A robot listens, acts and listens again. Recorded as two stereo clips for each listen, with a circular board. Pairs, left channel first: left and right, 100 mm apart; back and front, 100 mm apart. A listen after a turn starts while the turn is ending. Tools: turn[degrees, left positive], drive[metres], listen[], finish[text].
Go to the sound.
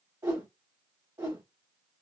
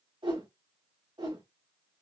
Thought: The whoosh: 30° right.
Action: turn[-30]
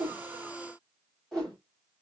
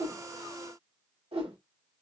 Action: drive[1.0]
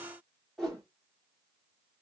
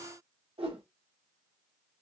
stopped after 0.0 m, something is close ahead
Action: finish[Something is in my way. I am facing the whoosh but have not reached it.]